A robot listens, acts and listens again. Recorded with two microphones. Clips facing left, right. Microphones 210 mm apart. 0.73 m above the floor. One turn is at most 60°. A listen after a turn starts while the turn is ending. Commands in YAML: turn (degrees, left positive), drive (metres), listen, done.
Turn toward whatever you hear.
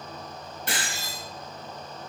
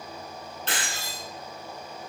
turn: 30
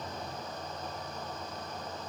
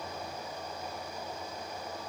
listen: true
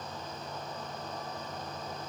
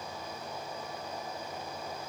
done: "I heard breaking glass, but can't make it out now. It was about 20° right or 140° left."